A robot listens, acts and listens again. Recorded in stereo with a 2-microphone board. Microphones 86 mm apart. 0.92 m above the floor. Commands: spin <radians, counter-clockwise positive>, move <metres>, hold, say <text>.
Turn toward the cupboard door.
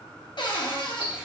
spin 1.13
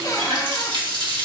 spin 0.87
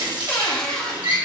hold
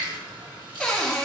spin 0.17
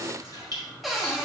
say Found it: a cupboard door, straight ahead, 1 to 2 m away.